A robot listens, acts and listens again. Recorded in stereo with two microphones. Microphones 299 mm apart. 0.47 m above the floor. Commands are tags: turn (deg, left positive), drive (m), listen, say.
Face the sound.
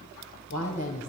<turn deg="60"/>
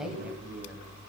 <turn deg="-10"/>
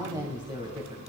<turn deg="-20"/>
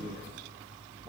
<listen/>
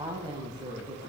<turn deg="-20"/>
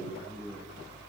<turn deg="-10"/>
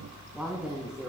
<say>Facing the woman speaking.</say>